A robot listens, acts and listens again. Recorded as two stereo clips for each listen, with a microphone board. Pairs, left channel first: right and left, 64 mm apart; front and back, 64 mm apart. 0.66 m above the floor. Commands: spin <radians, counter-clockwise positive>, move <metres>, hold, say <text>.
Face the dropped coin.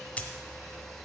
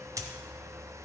spin -2.71
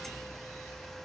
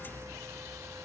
say I heard a dropped coin from this way, but can't make it out now.